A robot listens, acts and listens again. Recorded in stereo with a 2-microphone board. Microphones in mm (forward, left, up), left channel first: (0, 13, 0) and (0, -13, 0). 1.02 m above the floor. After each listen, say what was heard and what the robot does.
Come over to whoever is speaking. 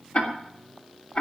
Keep listening.
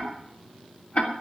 Keep listening.
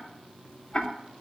I can't make out anyone speaking to turn to.